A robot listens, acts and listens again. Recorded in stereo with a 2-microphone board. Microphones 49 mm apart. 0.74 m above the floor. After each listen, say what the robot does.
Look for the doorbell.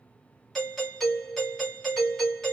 Turn 30° left.
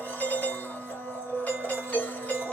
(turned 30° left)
Turn 145° left.
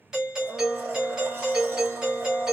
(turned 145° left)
Turn 15° right.
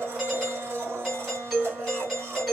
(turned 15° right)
Facing the doorbell, 1 to 2 m away.